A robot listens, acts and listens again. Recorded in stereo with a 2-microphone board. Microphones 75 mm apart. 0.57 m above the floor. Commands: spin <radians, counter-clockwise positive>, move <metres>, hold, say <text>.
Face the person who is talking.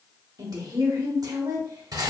spin -1.05
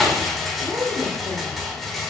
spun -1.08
spin -0.79
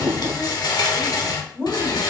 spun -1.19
spin 0.35
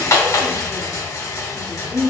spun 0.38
say Found it: a woman speaking, straight ahead.